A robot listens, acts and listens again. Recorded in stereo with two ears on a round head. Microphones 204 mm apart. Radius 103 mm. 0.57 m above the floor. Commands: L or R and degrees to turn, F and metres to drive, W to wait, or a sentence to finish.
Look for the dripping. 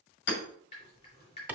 L25
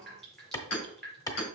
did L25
Found it: dripping, straight ahead.